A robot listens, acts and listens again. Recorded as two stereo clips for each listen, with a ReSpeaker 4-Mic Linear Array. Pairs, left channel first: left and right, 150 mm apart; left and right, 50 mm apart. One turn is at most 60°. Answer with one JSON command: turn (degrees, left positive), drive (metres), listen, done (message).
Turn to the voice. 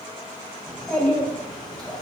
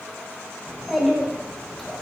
{"turn": 30}
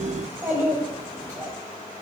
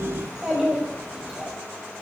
{"turn": -25}
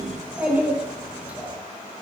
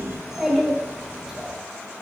{"turn": -10}
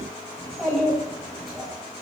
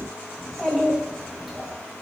{"done": "Facing the child speaking."}